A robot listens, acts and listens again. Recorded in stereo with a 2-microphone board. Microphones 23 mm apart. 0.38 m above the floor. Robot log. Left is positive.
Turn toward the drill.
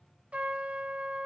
cmd idle
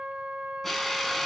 cmd yaw +30
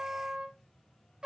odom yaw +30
cmd idle
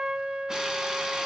cmd idle
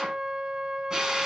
note: So it is at 30° right.
cmd yaw -30
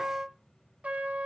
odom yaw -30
cmd idle
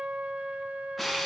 end: Facing the drill, 1 to 2 m away.